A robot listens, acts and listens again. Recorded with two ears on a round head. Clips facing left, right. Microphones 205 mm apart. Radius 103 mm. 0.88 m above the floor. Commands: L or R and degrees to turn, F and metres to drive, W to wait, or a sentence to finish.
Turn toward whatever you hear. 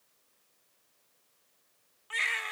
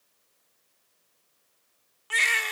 R60
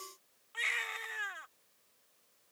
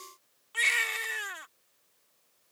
R55
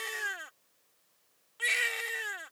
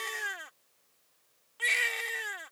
Found it: a baby crying, straight ahead.